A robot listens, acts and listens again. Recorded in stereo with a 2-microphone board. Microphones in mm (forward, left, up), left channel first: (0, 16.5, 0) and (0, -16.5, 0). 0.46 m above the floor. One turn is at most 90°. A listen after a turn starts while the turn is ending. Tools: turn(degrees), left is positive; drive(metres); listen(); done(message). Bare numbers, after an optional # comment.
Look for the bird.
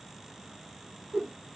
listen()
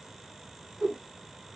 listen()
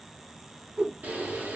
# The bird: about 55° right or 125° right.
turn(-55)
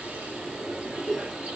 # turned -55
# So it is at 70° right.
turn(-70)
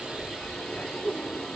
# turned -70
# The bird is now 15° left.
turn(15)
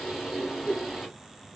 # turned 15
done("Facing the bird, 2 to 4 m away.")